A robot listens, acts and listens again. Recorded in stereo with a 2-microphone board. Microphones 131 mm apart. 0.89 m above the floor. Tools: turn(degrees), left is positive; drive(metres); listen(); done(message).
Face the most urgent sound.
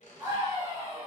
turn(degrees=-25)
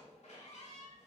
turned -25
listen()
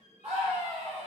turn(degrees=-130)
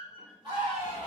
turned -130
turn(degrees=-45)
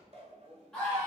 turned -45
done("Facing the scream.")